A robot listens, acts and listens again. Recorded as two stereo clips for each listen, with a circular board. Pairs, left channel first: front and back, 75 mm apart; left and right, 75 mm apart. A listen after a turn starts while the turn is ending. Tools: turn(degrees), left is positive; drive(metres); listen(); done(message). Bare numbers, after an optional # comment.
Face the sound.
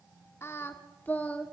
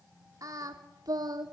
# The singing: 70° right.
turn(-70)
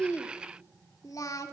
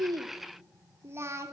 # The singing is now 40° right.
turn(-40)
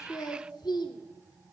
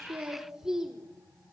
# The singing is now 10° right.
turn(-10)
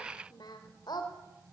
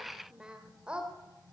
# The singing is now 15° right.
turn(-15)
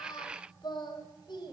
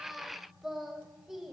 done("Facing the singing.")